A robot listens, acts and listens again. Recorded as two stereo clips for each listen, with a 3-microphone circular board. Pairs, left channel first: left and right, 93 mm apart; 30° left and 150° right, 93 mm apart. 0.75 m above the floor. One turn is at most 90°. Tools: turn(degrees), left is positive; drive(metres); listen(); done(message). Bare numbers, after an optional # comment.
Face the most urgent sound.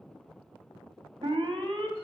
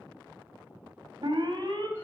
# The alarm: 115° right.
turn(-90)
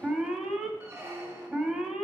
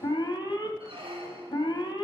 done("Facing the alarm.")